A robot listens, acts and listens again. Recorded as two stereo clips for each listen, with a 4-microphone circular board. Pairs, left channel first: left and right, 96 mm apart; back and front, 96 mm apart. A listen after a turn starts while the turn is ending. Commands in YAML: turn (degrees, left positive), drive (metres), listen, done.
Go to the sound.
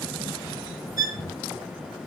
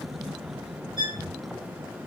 turn: -40
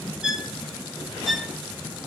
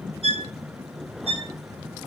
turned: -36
drive: 1.0
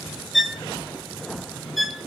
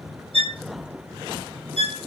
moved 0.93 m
drive: 1.0
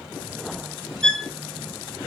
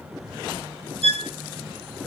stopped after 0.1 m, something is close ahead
done: "Arrived at the violin, straight ahead."